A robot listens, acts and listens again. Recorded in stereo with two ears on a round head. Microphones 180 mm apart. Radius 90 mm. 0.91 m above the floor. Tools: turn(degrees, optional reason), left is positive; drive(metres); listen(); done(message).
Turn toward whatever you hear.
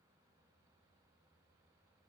listen()
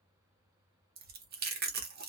turn(degrees=-50, reason="The chewing: about 50° right or 130° right.")
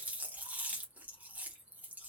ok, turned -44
turn(degrees=-10, reason="So it is at 10° right.")
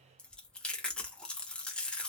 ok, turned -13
done("Found it: chewing, straight ahead, 1 to 2 m away.")